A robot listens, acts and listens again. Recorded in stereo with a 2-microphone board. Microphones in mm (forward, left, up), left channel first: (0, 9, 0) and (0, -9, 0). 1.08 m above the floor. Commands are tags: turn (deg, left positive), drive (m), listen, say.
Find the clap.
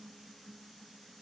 <listen/>
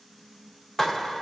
<turn deg="30"/>
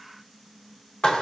<turn deg="135"/>
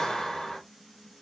<turn deg="40"/>
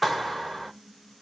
<say>Facing the clap.</say>